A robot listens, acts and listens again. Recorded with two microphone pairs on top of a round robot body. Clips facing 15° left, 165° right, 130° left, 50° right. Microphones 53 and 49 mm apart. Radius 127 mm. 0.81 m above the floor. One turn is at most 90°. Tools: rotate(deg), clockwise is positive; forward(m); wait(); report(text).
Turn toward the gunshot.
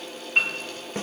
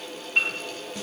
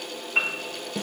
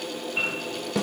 wait()
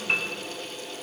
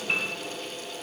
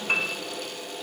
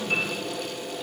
wait()
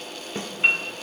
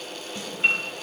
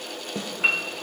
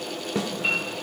report("I can't make out a gunshot, only a piano.")